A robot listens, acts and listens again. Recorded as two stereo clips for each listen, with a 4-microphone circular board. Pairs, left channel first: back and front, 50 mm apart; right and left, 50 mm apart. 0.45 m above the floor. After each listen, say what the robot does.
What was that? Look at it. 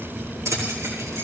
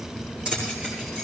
Turn 20° left.
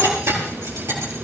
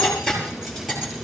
Found it: keys jangling, straight ahead, over 4 m away.